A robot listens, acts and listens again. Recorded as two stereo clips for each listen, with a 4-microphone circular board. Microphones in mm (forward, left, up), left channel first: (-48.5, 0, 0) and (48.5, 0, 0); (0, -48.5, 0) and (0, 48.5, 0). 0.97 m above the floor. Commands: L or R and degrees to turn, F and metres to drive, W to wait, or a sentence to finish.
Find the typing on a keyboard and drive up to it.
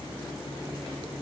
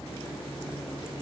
W
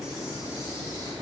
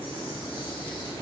W
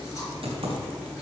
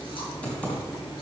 R10
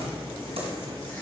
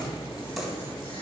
W
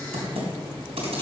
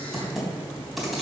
F1.0
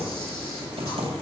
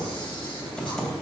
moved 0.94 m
F1.0
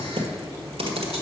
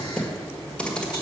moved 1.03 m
R10
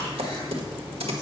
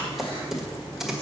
F1.0
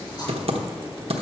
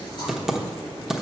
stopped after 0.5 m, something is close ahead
I am next to the typing on a keyboard.